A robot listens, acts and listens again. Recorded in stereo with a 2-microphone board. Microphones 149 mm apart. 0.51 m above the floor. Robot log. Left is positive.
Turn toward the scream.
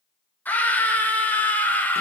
cmd yaw +30
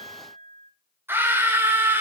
note: So it is at 15° right.
cmd yaw -15
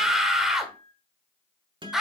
end: Facing the scream.